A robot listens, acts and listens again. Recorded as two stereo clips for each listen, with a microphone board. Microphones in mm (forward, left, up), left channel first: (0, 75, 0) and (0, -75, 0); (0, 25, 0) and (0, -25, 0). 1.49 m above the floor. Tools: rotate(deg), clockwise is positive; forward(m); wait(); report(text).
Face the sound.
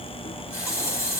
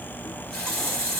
rotate(-20)
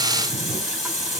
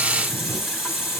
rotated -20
report("Facing the running tap, 2 to 4 m away.")